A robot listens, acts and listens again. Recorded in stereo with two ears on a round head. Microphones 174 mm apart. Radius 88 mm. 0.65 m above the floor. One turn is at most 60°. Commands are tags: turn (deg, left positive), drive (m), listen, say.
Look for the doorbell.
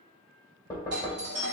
<turn deg="-55"/>
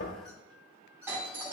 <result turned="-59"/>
<turn deg="-10"/>
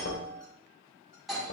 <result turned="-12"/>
<say>Facing the doorbell, 2 to 4 m away.</say>